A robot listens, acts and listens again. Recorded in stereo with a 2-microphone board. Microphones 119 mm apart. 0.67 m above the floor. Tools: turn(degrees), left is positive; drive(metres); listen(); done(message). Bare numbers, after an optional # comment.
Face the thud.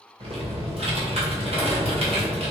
listen()
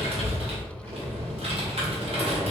listen()
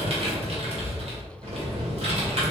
done("I can't make out a thud to turn to.")